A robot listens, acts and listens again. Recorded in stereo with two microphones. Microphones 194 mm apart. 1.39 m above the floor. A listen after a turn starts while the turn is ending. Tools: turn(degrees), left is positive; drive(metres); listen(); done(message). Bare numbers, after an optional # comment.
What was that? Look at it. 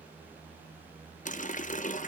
# The running tap: about 40° left or 140° left.
turn(40)
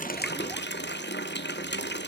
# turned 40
# So it is at 95° left.
turn(95)
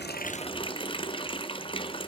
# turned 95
# The running tap is now 30° left.
turn(30)
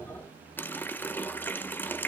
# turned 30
# The running tap is now 10° left.
turn(10)
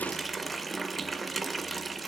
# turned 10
done("Facing the running tap.")